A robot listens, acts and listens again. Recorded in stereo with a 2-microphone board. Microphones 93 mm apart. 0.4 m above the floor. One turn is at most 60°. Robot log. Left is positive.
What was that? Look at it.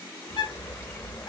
note: The bird: about 60° left or 120° left.
cmd yaw +60
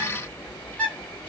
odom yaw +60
note: So it is at 20° left.
cmd yaw +20
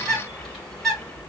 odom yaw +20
end: Facing the bird, 1 to 2 m away.